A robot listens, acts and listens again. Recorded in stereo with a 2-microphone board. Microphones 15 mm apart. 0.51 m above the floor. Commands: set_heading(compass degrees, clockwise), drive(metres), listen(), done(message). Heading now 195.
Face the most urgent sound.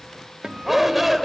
set_heading(210)
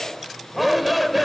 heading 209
done("Facing the shout, 2 to 4 m away.")